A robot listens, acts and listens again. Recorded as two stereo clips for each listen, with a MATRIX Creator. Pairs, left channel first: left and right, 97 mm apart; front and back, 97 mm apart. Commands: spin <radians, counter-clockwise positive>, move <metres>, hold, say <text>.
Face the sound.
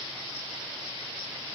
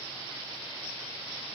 hold
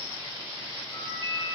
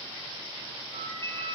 spin 2.53
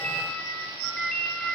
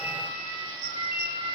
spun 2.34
spin 0.17
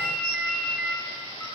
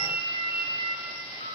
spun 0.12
say Found it: a ringtone, straight ahead.